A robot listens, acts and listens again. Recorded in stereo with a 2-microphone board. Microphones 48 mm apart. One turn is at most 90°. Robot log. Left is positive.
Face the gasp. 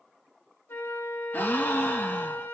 note: The gasp: about 45° left or 135° left.
cmd yaw +45
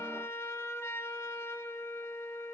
cmd idle
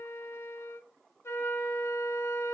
end: I heard a gasp, but can't make it out now. It was about straight ahead or 90° left.